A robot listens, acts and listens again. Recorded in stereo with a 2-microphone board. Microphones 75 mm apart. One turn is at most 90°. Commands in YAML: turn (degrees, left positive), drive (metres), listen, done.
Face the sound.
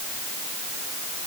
listen: true
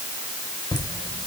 turn: 75
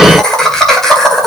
done: "Facing the laughter, 2 to 4 m away."